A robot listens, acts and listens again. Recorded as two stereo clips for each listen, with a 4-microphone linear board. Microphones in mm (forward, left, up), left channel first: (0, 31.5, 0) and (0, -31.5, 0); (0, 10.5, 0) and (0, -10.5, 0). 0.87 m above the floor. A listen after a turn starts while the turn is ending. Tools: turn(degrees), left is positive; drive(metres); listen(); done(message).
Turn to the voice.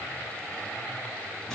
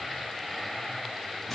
listen()
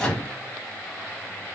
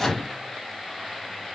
listen()
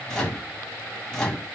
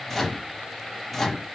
done("I can't make out anyone speaking to turn to.")